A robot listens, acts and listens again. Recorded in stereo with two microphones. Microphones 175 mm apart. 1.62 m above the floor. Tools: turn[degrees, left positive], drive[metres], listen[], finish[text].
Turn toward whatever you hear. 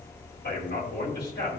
Thought: The man speaking: about 70° left or 110° left.
Action: turn[70]
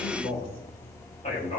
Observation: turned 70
Thought: So it is at 40° left.
Action: turn[40]
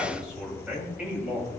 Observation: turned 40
Action: finish[Found it: a man speaking, straight ahead, over 4 m away.]